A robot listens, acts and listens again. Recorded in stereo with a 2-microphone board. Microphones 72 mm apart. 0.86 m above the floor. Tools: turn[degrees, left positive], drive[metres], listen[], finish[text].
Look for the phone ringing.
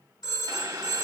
Thought: The phone ringing: about 70° left or 110° left.
Action: turn[70]
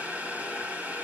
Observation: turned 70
Action: listen[]
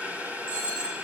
Action: finish[Facing the phone ringing, over 4 m away.]